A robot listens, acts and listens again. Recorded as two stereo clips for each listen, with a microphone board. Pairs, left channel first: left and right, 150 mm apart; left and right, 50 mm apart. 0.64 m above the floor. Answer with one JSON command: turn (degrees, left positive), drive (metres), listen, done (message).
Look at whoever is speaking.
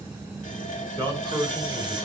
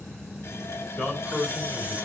{"turn": 15}
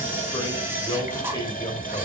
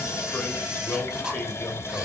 {"turn": 150}
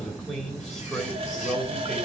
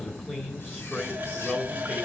{"done": "Found it: a man speaking, straight ahead."}